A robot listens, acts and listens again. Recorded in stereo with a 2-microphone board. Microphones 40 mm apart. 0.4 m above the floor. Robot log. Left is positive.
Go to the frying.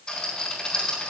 cmd idle
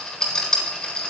cmd idle
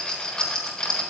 end: I can't make out frying, only a rattle.